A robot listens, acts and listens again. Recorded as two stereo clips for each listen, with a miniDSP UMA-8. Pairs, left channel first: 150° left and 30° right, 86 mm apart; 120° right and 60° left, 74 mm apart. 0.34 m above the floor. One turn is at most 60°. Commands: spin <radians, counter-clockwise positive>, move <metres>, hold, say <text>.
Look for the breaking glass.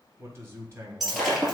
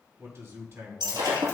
spin 1.05
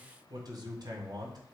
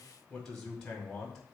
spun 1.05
say I heard breaking glass from this way, but can't make it out now.